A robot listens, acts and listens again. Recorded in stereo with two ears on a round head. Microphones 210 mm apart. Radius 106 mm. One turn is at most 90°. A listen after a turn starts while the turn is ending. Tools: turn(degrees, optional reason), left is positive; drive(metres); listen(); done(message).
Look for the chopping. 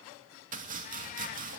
turn(degrees=-35, reason="The chopping: about 35° right or 145° right.")
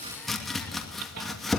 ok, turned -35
done("Facing the chopping, 2 to 4 m away.")